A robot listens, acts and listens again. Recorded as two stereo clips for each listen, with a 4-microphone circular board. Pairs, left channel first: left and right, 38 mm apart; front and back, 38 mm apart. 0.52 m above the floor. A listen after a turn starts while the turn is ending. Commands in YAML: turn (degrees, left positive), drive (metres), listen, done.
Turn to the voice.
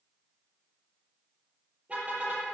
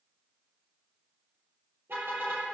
listen: true
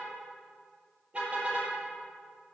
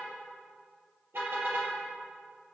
listen: true
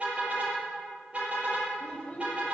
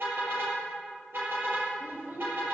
turn: 155
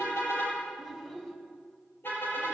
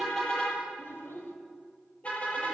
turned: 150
done: "Found it: a child speaking, straight ahead, 2 to 4 m away."